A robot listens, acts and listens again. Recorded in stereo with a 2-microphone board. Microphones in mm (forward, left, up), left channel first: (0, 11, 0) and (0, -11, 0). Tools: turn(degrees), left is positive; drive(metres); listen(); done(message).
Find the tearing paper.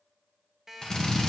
listen()
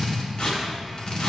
turn(degrees=65)
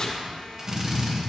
turn(degrees=50)
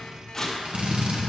turn(degrees=10)
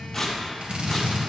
done("Found it: tearing paper, straight ahead, 1 to 2 m away.")